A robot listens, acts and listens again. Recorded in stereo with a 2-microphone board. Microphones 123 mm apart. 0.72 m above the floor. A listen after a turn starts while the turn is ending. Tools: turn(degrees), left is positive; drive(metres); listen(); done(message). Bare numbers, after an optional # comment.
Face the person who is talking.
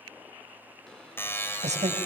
# The woman speaking: about 65° right or 115° right.
turn(-65)
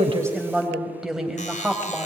done("Facing the woman speaking, over 4 m away.")